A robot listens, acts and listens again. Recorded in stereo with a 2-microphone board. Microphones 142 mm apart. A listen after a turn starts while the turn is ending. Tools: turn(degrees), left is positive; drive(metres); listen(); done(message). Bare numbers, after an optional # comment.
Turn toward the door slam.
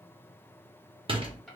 # The door slam: about 40° right or 140° right.
turn(-40)
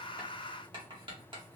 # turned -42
listen()
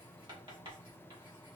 done("I heard a door slam, but can't make it out now. It was about 5° left or 100° right.")